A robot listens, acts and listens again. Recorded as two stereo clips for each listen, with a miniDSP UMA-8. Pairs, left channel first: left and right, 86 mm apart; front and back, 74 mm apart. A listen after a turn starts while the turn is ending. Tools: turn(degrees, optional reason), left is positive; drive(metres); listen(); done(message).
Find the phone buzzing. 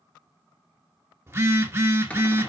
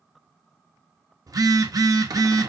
turn(degrees=-150, reason="The phone buzzing: 150° right.")
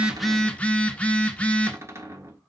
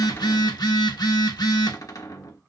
turn(degrees=15, reason="The phone buzzing is now 15° left.")
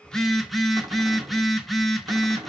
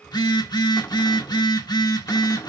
done("Found it: a phone buzzing, straight ahead.")